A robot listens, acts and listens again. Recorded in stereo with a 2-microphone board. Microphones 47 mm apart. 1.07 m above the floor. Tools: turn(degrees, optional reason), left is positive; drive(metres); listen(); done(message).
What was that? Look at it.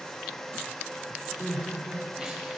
turn(degrees=-15, reason="The crying: about 15° right or 165° right.")
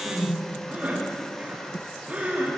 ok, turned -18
turn(degrees=-145, reason="So it is at 145° right.")
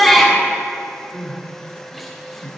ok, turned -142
done("Facing the crying, 2 to 4 m away.")